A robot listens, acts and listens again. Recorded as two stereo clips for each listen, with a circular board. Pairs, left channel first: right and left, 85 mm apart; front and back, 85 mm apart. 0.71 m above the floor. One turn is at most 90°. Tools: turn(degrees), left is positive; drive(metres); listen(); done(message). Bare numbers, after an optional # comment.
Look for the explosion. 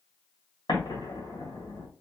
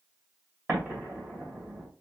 # The explosion: 115° right.
turn(-90)
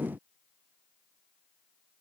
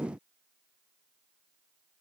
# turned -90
# Nothing new. It was at 25° right.
turn(-25)
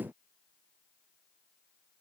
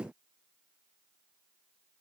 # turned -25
done("I heard an explosion from this way, but can't make it out now.")